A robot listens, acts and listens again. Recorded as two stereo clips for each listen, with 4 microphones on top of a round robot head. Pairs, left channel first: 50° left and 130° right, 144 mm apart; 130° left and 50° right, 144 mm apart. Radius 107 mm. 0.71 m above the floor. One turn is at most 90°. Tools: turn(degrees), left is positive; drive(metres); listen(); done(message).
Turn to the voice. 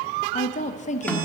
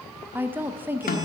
turn(degrees=25)
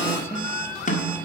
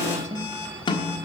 turn(degrees=-25)
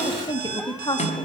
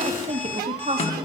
turn(degrees=-10)
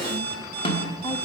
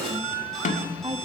done("Facing the woman speaking.")